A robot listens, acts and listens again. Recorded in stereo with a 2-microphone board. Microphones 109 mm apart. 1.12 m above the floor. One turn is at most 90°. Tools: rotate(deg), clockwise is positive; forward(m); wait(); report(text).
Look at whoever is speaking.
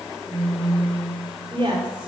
rotate(50)
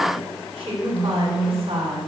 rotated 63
rotate(65)
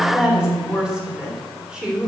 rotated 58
rotate(10)
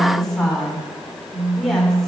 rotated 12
report("Found it: a woman speaking, straight ahead, 2 to 4 m away.")